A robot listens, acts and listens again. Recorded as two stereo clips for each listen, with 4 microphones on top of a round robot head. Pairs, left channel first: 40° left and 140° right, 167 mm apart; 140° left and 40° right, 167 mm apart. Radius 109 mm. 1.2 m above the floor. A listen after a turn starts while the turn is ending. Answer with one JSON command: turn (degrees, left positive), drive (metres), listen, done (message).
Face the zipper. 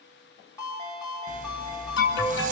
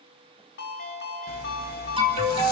{"turn": 170}
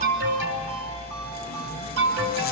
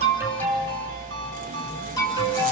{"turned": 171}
{"done": "Facing the zipper."}